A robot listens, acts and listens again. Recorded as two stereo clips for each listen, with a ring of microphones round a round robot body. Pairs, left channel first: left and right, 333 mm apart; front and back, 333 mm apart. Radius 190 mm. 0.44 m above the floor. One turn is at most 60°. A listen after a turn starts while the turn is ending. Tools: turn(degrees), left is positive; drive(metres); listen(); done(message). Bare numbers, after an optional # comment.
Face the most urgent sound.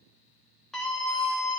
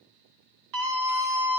# The scream: straight behind.
turn(60)
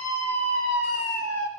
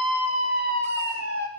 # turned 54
# The scream is now 125° left.
turn(60)
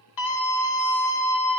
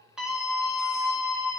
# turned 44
# The scream is now 80° left.
turn(60)
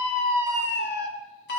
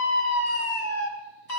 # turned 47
# The scream is now 35° left.
turn(35)
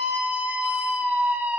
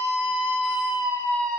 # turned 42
done("Found it: a scream, straight ahead, 2 to 4 m away.")